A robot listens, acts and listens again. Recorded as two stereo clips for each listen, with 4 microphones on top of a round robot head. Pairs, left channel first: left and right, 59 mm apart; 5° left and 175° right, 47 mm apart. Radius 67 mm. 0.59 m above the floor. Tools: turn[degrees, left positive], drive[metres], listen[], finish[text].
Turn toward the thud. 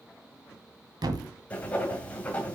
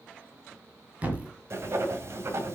Thought: The thud: 110° right.
Action: turn[-110]
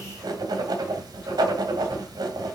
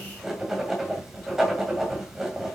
Action: finish[I heard a thud from this way, but can't make it out now.]